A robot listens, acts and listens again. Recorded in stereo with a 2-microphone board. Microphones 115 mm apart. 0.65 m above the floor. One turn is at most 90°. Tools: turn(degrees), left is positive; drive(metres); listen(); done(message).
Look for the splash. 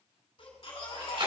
turn(degrees=-55)
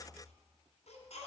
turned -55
listen()
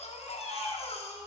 done("I heard a splash, but can't make it out now. It was about straight ahead or 70° right.")